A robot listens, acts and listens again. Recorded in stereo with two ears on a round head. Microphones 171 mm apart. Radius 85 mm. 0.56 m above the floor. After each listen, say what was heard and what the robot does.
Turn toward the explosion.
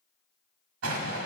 Turn 90° right.
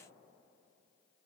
Facing where the explosion came from. I can't hear it now.